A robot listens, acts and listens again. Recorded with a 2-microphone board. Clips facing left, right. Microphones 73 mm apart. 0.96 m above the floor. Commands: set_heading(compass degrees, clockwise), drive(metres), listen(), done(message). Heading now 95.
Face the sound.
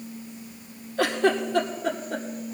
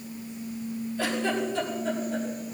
set_heading(30)
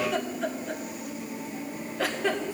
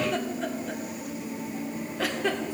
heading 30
done("Facing the giggle, 2 to 4 m away.")